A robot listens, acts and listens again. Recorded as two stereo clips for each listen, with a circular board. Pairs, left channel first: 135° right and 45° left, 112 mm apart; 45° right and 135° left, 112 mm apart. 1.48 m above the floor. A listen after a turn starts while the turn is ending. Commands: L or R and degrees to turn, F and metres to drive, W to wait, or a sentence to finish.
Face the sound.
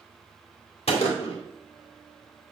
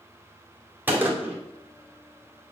R150
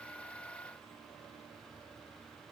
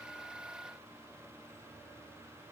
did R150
I heard a gunshot from this way, but can't make it out now.